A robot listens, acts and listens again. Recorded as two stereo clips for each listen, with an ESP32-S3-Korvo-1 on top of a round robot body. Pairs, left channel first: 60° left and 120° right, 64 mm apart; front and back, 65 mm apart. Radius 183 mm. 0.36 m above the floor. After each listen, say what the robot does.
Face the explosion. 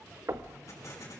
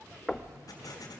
Turn 20° left.
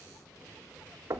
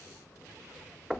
I heard an explosion from this way, but can't make it out now.